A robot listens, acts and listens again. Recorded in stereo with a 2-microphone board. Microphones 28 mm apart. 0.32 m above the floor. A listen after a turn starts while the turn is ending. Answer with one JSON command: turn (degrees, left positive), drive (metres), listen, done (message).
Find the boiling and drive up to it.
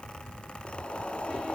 {"turn": 45}
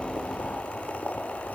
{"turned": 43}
{"turn": 95}
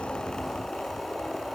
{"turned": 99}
{"drive": 1.0}
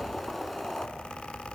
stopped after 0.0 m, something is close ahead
{"done": "Something is in my way. I am facing the boiling but have not reached it."}